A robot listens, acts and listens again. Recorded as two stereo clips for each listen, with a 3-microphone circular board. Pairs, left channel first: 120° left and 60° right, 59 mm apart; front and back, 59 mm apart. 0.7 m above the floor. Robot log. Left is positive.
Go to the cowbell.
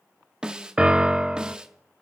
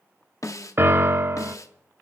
cmd idle
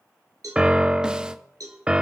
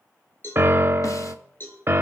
note: The cowbell: 50° right.
cmd yaw -50
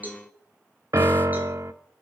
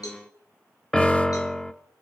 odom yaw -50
cmd fwd 1.0
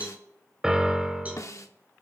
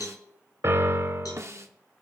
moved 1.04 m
cmd fwd 1.0
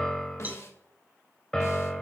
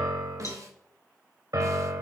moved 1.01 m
cmd idle
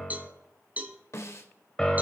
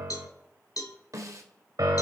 cmd fwd 1.0
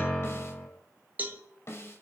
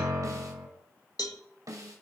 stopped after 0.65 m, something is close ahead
end: I am next to the cowbell.